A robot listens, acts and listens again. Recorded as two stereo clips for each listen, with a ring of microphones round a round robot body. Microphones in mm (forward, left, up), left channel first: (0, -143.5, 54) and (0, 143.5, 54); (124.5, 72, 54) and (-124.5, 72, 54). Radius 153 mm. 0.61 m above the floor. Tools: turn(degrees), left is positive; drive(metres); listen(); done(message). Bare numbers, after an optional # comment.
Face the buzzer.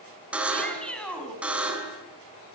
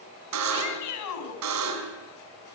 # The buzzer: 175° left.
turn(175)
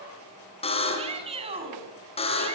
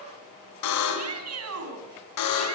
# The buzzer is now 20° right.
turn(-20)
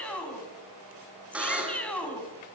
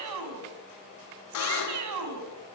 done("Facing the buzzer, 2 to 4 m away.")